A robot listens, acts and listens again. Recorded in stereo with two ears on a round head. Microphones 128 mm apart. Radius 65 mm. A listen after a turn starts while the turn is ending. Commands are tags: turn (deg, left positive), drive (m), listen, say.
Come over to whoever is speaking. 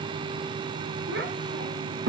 <turn deg="-90"/>
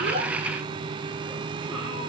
<listen/>
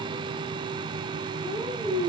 <drive m="1.0"/>
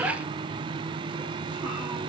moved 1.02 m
<listen/>
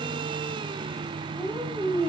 <turn deg="-10"/>
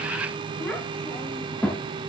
<drive m="1.0"/>
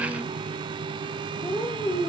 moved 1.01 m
<turn deg="15"/>
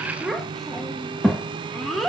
<drive m="1.0"/>
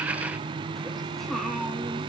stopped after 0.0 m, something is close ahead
<say>I am next to the child speaking.</say>